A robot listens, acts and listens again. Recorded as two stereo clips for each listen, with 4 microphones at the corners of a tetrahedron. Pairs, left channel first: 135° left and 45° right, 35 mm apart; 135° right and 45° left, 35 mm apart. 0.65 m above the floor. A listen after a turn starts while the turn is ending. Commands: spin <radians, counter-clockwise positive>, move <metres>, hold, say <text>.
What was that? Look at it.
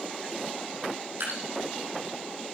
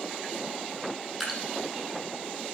spin -0.70
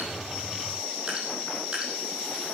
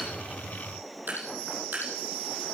spin 0.26
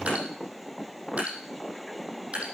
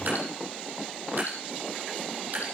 say Found it: dripping, straight ahead, over 4 m away.